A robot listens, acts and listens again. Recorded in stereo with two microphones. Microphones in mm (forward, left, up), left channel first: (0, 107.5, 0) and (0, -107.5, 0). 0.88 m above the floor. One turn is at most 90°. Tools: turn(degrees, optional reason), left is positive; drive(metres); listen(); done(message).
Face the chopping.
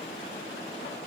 listen()
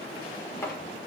turn(degrees=30)
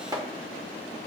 turn(degrees=-20, reason="So it is at 20° right.")
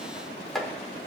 done("Facing the chopping, 1 to 2 m away.")